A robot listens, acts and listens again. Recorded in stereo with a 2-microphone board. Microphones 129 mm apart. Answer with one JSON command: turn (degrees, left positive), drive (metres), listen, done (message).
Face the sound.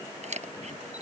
{"turn": -65}
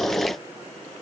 {"listen": true}
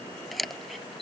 {"done": "Found it: a camera shutter, straight ahead."}